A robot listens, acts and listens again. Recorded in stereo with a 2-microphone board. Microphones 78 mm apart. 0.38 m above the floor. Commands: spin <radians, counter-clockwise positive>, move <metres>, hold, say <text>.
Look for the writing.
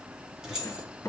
spin 0.70
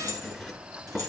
say Facing the writing, 2 to 4 m away.